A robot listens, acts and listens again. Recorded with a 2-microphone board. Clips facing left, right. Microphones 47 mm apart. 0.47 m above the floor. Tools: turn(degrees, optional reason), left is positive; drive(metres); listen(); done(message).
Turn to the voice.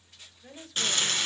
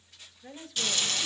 turn(degrees=-30)
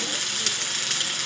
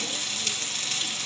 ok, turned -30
listen()
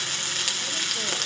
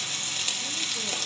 listen()
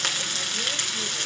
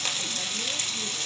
done("I heard a woman speaking, but can't make it out now. It was about 25° left or 145° right.")